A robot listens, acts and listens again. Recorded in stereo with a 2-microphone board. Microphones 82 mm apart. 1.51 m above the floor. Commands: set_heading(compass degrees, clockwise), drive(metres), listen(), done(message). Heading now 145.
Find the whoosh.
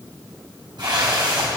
set_heading(205)
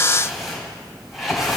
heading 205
done("Facing the whoosh.")